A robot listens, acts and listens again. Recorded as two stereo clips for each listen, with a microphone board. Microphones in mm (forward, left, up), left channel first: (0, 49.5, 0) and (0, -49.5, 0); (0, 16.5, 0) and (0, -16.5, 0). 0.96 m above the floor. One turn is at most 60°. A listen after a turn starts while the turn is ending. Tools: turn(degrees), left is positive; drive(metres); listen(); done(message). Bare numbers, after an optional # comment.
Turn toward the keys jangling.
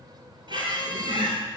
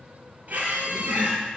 listen()
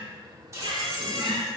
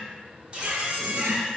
# The keys jangling: about 35° right or 145° right.
turn(-35)
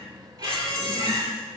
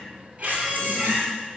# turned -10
listen()
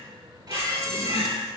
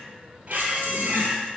listen()
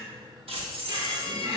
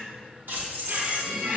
# The keys jangling: about 70° right or 110° right.
turn(-60)
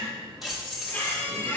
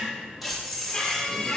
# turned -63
done("Found it: keys jangling, straight ahead.")